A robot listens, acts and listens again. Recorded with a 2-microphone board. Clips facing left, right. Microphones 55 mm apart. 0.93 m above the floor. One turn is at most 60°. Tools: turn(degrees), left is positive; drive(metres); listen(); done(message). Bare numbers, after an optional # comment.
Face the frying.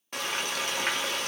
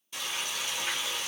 # The frying: about 60° left or 120° left.
turn(60)
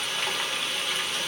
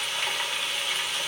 done("Facing the frying, under 1 m away.")